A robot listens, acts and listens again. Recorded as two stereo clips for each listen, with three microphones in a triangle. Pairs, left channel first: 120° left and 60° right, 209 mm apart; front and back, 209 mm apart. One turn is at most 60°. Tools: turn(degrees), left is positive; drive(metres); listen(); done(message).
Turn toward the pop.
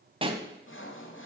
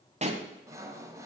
turn(degrees=-60)
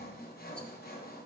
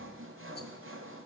turn(degrees=-60)
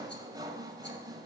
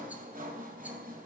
done("I heard a pop from this way, but can't make it out now.")